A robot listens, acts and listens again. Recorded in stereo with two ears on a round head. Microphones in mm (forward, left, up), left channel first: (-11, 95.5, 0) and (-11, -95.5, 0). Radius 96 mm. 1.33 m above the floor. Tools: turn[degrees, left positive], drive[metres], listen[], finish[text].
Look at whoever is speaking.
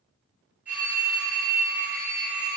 Action: listen[]
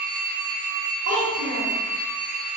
Thought: The child speaking: about 35° right or 145° right.
Action: turn[-35]
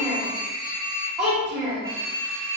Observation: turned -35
Action: finish[Found it: a child speaking, straight ahead.]